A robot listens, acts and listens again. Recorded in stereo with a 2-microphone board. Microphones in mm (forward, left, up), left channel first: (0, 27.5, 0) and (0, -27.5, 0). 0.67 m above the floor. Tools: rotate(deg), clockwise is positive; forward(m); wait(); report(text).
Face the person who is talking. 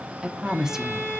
rotate(30)
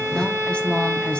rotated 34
rotate(-25)
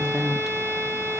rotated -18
report("Facing the woman speaking.")